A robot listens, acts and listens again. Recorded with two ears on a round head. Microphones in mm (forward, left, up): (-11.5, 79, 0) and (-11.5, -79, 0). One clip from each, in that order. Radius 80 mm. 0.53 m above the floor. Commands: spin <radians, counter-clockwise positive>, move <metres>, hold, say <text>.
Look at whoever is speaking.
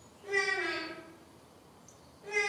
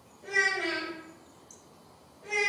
spin -1.31
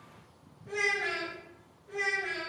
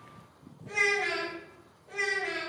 spin -0.35
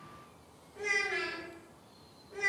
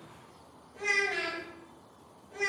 say Found it: a child speaking, straight ahead, 1 to 2 m away.